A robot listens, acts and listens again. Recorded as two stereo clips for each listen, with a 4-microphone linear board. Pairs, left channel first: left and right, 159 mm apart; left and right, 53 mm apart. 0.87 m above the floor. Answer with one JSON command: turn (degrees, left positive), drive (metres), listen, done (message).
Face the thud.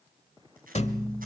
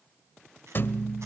{"turn": 45}
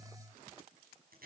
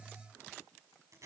{"listen": true}
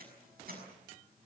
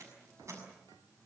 {"done": "I heard a thud, but can't make it out now. It was about straight ahead or 90° left."}